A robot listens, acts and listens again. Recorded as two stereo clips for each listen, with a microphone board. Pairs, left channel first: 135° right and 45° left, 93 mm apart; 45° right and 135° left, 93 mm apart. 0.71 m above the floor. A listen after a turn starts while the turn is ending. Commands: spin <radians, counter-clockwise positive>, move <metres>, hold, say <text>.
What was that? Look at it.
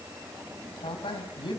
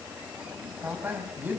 spin -2.71
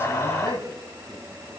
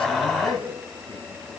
say Facing the man speaking, over 4 m away.